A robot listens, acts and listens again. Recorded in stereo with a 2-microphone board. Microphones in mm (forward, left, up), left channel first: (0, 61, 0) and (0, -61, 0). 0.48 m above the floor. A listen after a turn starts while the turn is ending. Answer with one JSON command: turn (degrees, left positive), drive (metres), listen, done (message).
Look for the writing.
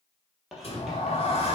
{"turn": 30}
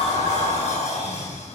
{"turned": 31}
{"listen": true}
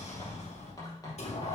{"turn": 150}
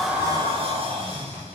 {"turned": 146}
{"listen": true}
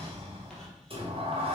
{"listen": true}
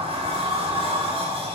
{"done": "Facing where the writing came from. I can't hear it now."}